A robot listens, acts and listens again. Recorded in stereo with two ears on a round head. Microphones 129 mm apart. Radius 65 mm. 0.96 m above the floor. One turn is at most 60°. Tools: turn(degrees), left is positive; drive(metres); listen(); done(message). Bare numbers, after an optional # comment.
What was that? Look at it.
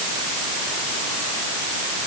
listen()
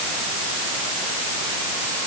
listen()
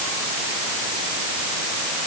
done("I can't make out anything to turn to.")